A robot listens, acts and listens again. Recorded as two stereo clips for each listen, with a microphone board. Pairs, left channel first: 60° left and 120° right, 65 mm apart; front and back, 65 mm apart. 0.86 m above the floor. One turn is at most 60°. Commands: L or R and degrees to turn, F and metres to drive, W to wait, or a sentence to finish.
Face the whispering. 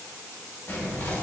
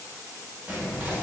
L60
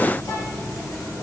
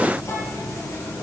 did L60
L35
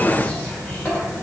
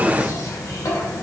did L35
Facing the whispering.